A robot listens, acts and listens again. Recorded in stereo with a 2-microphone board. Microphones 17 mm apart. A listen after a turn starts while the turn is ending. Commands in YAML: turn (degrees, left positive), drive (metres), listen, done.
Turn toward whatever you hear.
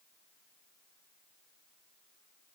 listen: true
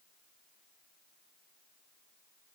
listen: true
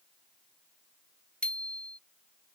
turn: 90
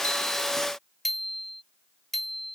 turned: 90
turn: 10
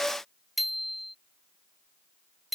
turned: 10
done: "Found it: a bicycle bell, straight ahead."